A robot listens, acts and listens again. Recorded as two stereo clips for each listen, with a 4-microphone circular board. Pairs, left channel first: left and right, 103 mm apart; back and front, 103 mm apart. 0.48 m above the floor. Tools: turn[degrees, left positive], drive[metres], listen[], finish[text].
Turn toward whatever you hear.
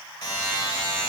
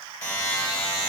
Thought: The buzzer: 135° left.
Action: turn[135]
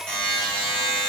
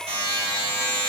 Thought: The buzzer is now 10° left.
Action: turn[10]
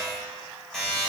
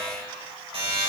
Action: finish[Found it: a buzzer, straight ahead, 1 to 2 m away.]